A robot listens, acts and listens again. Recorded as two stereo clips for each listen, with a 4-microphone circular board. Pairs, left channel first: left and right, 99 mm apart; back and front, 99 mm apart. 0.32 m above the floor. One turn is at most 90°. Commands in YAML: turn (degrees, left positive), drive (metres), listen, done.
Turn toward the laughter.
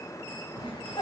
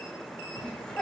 turn: 90
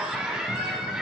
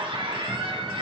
turn: -10
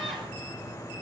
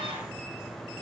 listen: true
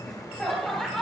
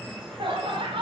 done: "Found it: laughter, straight ahead."